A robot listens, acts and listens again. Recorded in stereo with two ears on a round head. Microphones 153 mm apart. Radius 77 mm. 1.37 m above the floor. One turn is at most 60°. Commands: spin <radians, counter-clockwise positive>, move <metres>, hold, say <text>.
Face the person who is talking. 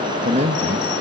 spin -0.70
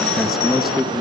say Found it: a man speaking, straight ahead, 1 to 2 m away.